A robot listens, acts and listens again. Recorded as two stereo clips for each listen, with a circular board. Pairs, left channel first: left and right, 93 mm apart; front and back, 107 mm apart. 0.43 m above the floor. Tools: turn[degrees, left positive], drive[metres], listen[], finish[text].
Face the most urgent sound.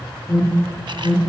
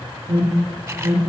Thought: The alarm: straight behind.
Action: turn[180]
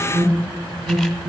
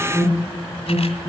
Thought: The alarm is now 55° right.
Action: turn[-55]
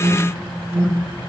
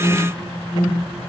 Thought: The alarm is now 30° right.
Action: turn[-30]
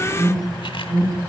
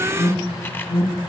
Thought: The alarm is now 10° left.
Action: turn[10]
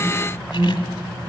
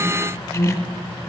Action: finish[Found it: an alarm, straight ahead, over 4 m away.]